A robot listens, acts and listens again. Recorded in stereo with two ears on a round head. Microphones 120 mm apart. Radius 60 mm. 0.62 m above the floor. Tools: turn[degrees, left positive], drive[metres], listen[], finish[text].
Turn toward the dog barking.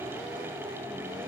Action: listen[]
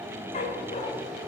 Thought: The dog barking: about 50° left or 130° left.
Action: turn[50]
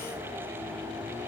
Action: listen[]
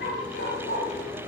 Thought: So it is at 85° left.
Action: turn[85]
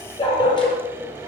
Thought: The dog barking is now 35° left.
Action: turn[35]
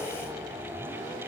Action: listen[]
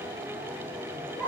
Thought: The dog barking is now 15° left.
Action: turn[15]
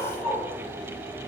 Action: finish[Facing the dog barking, over 4 m away.]